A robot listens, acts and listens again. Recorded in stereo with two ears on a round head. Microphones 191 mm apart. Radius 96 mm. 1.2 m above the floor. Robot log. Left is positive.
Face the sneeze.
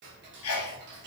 note: The sneeze: about 75° left or 105° left.
cmd yaw +75
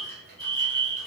cmd idle
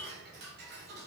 end: I heard a sneeze, but can't make it out now. It was about straight ahead or 30° left.